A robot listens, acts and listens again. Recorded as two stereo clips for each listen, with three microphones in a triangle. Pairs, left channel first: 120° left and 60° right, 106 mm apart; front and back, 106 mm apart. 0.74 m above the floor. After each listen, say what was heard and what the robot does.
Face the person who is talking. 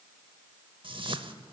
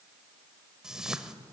Keep listening.
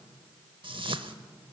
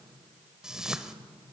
Keep listening.
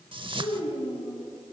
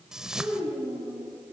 The child speaking: 85° left. Turn 85° left.
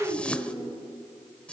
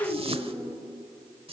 The child speaking is now 20° left. Turn 20° left.
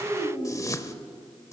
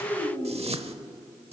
Facing the child speaking, over 4 m away.